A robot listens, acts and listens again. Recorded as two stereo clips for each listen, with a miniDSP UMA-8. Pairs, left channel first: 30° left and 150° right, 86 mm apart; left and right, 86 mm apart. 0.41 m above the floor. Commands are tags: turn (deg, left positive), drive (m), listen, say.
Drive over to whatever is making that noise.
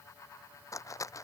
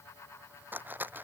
<turn deg="-20"/>
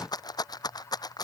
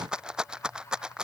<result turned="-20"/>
<turn deg="-10"/>
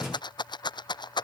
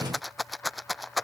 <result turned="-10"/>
<drive m="1.0"/>
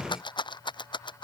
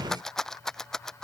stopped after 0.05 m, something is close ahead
<say>Blocked. The rattle is further on, straight ahead.</say>